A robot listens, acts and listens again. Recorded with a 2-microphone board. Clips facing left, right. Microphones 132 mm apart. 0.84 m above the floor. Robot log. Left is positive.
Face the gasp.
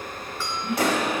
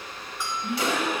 note: The gasp: about 25° right or 155° right.
cmd yaw -25
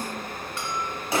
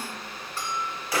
cmd idle
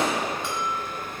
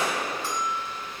end: I heard a gasp, but can't make it out now. It was about straight ahead or 130° right.